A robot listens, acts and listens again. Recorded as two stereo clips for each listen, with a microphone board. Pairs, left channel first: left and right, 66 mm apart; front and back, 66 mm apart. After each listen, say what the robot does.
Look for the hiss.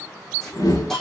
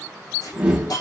Facing the hiss, 2 to 4 m away.